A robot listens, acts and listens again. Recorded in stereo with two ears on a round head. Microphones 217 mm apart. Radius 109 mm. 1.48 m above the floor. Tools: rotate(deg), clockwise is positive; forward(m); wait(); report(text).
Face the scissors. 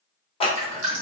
rotate(-20)
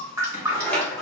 report("Found it: scissors, straight ahead, under 1 m away.")